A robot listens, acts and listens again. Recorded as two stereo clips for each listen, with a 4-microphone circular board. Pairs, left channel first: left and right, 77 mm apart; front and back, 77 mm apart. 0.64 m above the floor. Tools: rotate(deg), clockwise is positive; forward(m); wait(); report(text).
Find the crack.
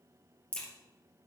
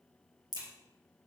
rotate(-165)
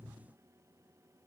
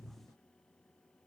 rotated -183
rotate(20)
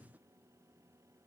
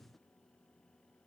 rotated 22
report("Facing where the crack came from. I can't hear it now.")